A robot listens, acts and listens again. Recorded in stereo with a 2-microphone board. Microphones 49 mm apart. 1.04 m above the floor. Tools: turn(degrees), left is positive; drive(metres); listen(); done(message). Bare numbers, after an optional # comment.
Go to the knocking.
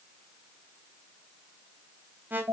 listen()
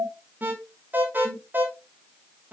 listen()
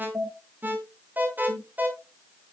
done("I can't make out knocking to turn to.")